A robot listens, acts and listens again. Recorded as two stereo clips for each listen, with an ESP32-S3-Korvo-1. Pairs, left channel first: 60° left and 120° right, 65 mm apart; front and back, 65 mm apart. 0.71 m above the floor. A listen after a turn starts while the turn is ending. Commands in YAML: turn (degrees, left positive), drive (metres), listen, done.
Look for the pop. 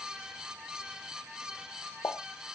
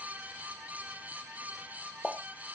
turn: 100
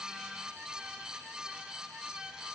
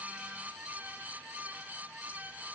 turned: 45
turn: 55
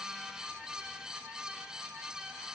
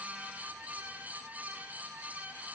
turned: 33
turn: 25
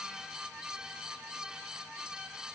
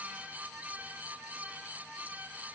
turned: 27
done: "Facing where the pop came from. I can't hear it now."